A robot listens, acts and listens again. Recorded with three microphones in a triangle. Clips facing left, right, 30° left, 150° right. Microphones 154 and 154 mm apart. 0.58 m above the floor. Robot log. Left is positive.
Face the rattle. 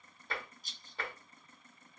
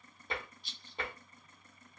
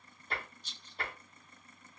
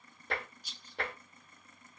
note: The rattle: 135° left.
cmd yaw +135
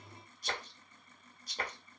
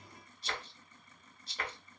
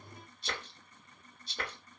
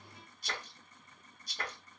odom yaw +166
note: The rattle is now 35° right.
cmd yaw -35
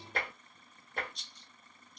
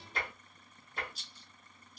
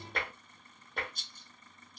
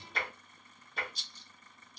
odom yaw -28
end: Found it: a rattle, straight ahead, under 1 m away.